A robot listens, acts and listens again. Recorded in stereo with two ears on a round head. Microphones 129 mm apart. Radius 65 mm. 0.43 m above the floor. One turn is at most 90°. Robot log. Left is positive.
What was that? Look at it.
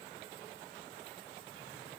cmd idle
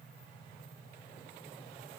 cmd idle
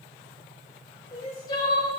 note: The crying: about 35° left or 145° left.
cmd yaw +35
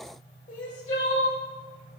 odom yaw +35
note: So it is at 100° left.
cmd yaw +90
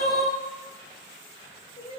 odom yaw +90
note: The crying is now 55° left.
cmd yaw +55
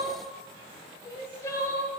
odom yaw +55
note: The crying is now 25° left.
cmd yaw +25
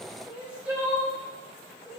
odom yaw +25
note: The crying is now 10° right.
cmd yaw -10
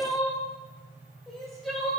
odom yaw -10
end: Found it: crying, straight ahead, 1 to 2 m away.